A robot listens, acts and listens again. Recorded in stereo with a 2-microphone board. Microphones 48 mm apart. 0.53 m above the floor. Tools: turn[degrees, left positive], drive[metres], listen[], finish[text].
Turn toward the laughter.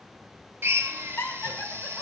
Thought: The laughter: about 55° left or 125° left.
Action: turn[55]
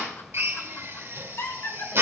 Thought: So it is at 60° left.
Action: turn[60]
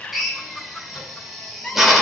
Thought: The laughter is now 25° left.
Action: turn[25]
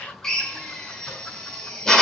Action: listen[]
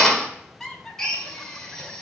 Thought: The laughter is now 10° left.
Action: turn[10]
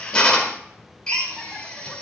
Action: listen[]
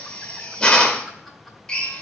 Action: listen[]
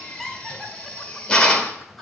Action: finish[Facing the laughter.]